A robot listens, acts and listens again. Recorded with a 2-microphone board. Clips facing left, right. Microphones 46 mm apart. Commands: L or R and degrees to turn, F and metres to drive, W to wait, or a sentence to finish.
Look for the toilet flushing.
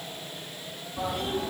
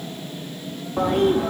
R50
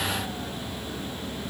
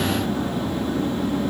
R80
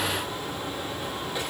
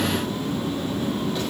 L15
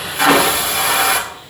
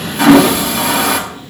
Facing the toilet flushing.